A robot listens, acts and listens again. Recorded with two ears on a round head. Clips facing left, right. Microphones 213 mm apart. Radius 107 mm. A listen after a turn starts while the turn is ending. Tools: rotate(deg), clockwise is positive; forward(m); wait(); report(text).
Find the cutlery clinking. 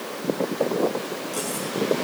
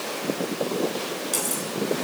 rotate(55)
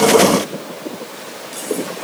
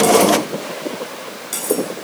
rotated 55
rotate(70)
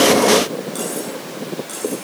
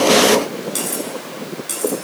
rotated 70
rotate(40)
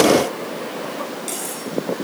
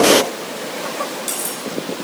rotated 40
rotate(15)
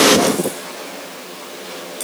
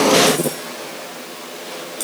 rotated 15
report("Found it: cutlery clinking, straight ahead.")